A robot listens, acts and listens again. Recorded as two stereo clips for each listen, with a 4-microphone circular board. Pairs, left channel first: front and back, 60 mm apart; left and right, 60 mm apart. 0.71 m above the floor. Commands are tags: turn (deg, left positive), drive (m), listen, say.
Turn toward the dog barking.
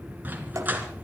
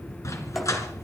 <turn deg="120"/>
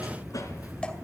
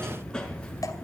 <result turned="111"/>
<turn deg="10"/>
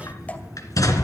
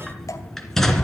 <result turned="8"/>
<say>Found it: a dog barking, straight ahead, 2 to 4 m away.</say>